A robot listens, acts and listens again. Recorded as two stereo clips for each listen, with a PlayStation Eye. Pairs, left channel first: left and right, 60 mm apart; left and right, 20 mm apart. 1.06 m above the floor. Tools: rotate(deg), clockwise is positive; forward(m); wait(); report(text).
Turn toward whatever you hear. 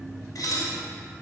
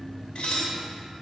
rotate(-70)
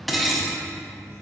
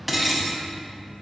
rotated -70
report("Found it: dishes clattering, straight ahead, under 1 m away.")